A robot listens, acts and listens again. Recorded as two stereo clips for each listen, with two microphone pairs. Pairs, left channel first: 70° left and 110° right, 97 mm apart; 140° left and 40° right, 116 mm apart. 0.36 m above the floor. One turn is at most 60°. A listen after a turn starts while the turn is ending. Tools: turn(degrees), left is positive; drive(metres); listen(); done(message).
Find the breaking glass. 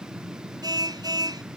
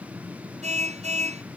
listen()
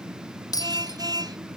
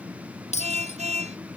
turn(degrees=60)
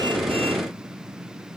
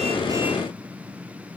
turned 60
turn(degrees=60)
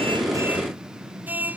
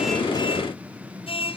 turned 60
done("I heard breaking glass from this way, but can't make it out now.")